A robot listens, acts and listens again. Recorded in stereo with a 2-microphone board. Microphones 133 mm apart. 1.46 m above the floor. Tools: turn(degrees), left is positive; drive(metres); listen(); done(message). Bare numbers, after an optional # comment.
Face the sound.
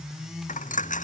# The dropped coin: about 75° left or 105° left.
turn(75)
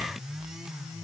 listen()
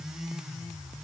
done("I heard a dropped coin, but can't make it out now. It was about straight ahead or 30° left.")